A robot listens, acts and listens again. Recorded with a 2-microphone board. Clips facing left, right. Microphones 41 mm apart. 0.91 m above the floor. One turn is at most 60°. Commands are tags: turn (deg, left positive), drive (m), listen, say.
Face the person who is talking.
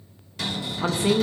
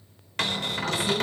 <turn deg="60"/>
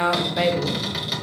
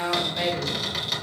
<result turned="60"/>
<turn deg="25"/>
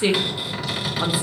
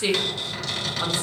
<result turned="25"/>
<turn deg="10"/>
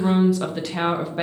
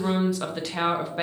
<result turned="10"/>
<say>Facing the woman speaking.</say>